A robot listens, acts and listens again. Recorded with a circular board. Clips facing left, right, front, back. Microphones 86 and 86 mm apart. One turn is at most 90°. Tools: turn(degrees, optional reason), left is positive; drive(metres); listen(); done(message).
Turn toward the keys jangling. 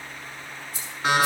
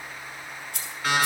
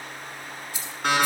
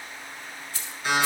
turn(degrees=-75, reason="The keys jangling: 75° right.")
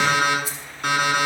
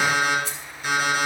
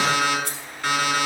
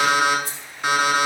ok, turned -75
done("Found it: keys jangling, straight ahead, 2 to 4 m away.")